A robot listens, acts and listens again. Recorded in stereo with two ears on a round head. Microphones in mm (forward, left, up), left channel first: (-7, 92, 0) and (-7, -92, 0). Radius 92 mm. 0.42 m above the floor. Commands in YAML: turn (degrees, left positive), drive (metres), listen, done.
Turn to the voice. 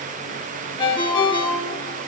listen: true
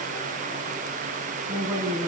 turn: -20
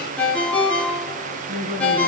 turn: -140
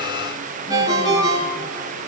listen: true
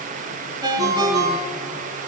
listen: true
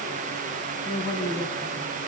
turn: 25
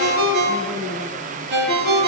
listen: true
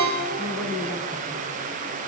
done: "Facing the woman speaking, 2 to 4 m away."